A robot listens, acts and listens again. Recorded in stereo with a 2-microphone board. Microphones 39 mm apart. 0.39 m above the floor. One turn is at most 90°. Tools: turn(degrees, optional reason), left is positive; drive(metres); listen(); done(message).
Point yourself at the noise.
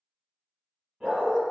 turn(degrees=-30)
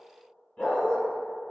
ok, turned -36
turn(degrees=25, reason="So it is at 25° left.")
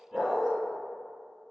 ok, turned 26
done("Found it: a dog barking, straight ahead.")